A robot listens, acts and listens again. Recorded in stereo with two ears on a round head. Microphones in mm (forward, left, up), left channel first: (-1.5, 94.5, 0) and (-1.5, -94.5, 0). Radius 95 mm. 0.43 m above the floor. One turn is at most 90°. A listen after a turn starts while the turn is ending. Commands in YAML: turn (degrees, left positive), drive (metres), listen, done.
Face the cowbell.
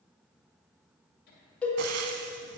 turn: 30
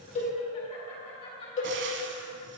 turn: 90
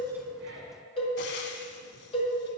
turn: 30
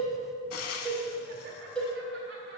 done: "Found it: a cowbell, straight ahead, 1 to 2 m away."